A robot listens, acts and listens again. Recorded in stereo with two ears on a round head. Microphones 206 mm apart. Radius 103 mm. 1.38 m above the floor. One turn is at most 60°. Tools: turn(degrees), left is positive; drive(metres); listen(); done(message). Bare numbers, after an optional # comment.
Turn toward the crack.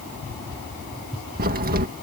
# The crack: about 40° right or 140° right.
turn(-40)
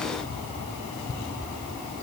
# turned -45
listen()
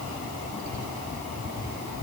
done("I heard a crack, but can't make it out now. It was about 5° left or 95° right.")